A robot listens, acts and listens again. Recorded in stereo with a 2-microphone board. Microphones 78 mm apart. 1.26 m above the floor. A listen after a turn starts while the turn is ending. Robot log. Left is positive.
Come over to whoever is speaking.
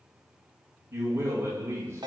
note: The man speaking: about 30° right or 150° right.
cmd yaw -30
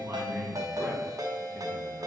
cmd fwd 1.0
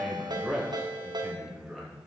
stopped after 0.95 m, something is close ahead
end: Arrived at the man speaking, straight ahead.